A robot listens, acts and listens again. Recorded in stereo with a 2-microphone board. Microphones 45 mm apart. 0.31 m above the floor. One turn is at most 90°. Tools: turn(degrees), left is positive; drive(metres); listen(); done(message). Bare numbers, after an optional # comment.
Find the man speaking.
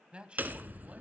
# The man speaking: about 25° right or 155° right.
turn(-25)
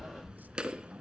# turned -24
listen()
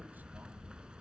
listen()
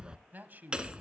# So it is at 125° right.
turn(-90)
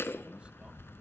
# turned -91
# Nothing new. It was at 35° right.
turn(-35)
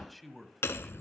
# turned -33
done("Found it: a man speaking, straight ahead.")